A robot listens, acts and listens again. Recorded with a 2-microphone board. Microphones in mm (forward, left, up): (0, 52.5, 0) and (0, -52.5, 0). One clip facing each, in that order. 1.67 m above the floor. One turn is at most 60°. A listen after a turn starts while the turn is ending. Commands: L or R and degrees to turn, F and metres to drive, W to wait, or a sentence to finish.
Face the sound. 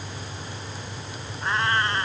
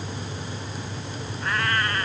L25
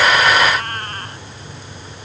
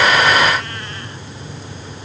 L60
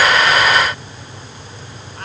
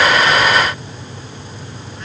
L60
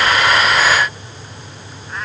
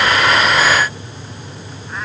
W
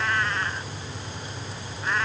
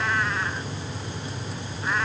Facing the cat meowing.